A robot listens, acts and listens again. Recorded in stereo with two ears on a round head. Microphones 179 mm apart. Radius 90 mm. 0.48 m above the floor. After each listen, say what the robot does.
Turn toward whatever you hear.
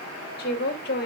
Turn 55° left.
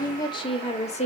Turn 35° left.
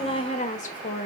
Turn 45° left.
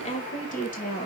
Turn 45° left.
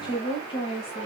Turn 30° left.
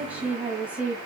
Facing the woman speaking.